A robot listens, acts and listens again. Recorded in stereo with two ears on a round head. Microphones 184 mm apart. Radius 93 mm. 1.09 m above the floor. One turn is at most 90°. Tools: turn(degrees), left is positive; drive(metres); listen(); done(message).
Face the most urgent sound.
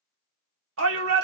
turn(degrees=-75)
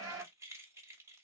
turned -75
turn(degrees=-15)
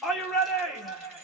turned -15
done("Found it: a shout, straight ahead, 2 to 4 m away.")